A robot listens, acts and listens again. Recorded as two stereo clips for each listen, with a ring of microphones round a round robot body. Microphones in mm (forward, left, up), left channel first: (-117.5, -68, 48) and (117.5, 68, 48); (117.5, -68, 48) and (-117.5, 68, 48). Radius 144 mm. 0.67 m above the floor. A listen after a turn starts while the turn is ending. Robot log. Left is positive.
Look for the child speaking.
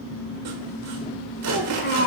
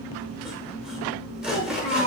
note: The child speaking: 95° right.
cmd yaw -95
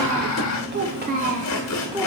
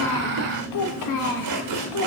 note: The child speaking is now 50° right.
cmd yaw -50
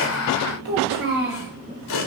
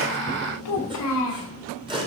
note: The child speaking is now 20° right.
cmd yaw -20
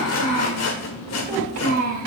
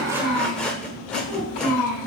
end: Found it: a child speaking, straight ahead, 2 to 4 m away.